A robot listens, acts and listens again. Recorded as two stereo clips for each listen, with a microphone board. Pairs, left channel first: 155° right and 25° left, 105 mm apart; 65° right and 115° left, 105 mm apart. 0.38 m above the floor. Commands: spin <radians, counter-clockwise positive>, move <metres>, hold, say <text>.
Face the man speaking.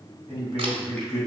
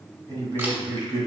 spin 2.71
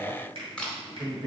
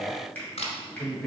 spin 0.26
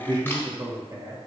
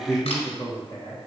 spin -0.44
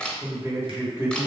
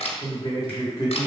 spin -0.79
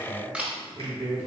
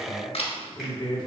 spin -0.70
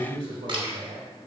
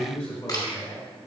say Found it: a man speaking, straight ahead.